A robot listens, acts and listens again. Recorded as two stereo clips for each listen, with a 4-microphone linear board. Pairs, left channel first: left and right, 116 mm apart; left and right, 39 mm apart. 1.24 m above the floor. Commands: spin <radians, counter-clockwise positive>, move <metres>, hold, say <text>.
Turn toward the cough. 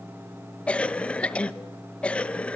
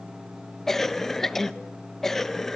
spin 0.52
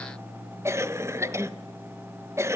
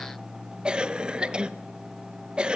spin -0.44
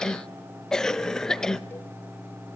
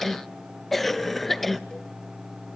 say Facing the cough, under 1 m away.